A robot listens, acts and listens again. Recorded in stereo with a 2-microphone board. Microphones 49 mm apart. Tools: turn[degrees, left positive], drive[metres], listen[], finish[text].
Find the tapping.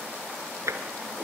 Action: turn[-90]
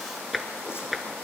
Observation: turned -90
Action: finish[Found it: tapping, straight ahead, 1 to 2 m away.]